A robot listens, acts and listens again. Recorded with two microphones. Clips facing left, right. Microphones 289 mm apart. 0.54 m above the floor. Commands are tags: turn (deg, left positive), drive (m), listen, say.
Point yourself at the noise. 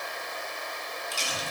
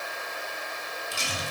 <turn deg="-30"/>
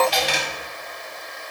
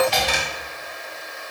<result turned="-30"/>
<turn deg="-120"/>
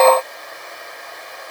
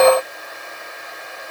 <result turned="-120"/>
<say>Facing where the dropped coin came from. I can't hear it now.</say>